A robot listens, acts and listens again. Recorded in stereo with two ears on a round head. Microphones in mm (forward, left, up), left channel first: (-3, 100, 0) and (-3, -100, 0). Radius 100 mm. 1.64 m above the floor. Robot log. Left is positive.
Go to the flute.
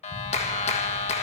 cmd idle
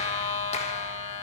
cmd idle
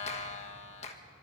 end: I can't make out a flute to turn to.